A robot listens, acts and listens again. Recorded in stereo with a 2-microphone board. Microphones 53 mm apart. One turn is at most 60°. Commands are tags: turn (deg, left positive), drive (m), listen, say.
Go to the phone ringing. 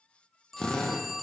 <turn deg="30"/>
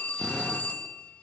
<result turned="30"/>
<turn deg="60"/>
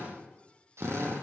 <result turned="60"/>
<turn deg="60"/>
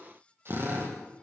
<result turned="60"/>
<turn deg="30"/>
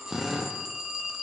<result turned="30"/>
<turn deg="-10"/>
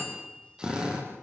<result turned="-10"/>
<listen/>
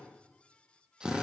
<listen/>
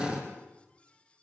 <say>Facing where the phone ringing came from. I can't hear it now. I did not reach it.</say>